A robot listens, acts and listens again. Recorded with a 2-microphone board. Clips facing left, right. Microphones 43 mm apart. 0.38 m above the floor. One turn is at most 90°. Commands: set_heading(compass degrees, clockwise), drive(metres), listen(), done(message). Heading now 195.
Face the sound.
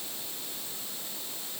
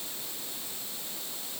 listen()
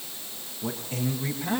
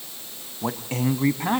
set_heading(265)
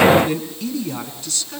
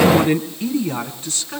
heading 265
set_heading(295)
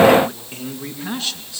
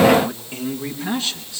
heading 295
done("Facing the man speaking, over 4 m away.")